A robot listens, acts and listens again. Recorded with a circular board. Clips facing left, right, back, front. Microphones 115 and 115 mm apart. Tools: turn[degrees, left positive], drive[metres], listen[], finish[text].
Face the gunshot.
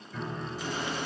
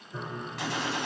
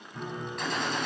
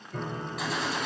Thought: The gunshot: 85° right.
Action: turn[-85]
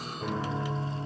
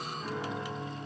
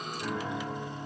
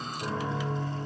Action: finish[Facing where the gunshot came from. I can't hear it now.]